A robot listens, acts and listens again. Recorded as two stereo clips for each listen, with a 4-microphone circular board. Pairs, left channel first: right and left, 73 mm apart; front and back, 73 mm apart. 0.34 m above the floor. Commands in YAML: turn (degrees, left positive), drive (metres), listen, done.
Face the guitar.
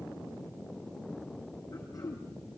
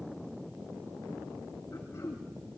listen: true
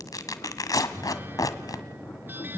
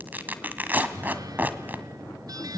turn: 150
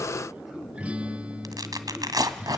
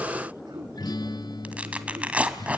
turn: 15
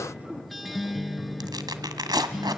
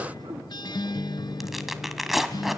done: "Facing the guitar."